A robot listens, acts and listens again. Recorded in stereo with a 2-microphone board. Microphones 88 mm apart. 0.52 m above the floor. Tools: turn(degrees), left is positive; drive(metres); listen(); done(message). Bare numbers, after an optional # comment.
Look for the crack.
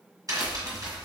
# The crack: about 45° right or 135° right.
turn(-45)
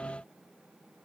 listen()
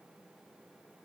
done("I heard a crack, but can't make it out now. It was about straight ahead or 90° right.")